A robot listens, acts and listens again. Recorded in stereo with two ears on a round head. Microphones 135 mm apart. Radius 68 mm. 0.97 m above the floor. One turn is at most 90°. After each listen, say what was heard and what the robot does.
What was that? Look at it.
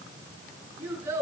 The child speaking: about 20° right or 160° right. Turn 20° right.
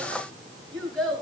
Facing the child speaking, over 4 m away.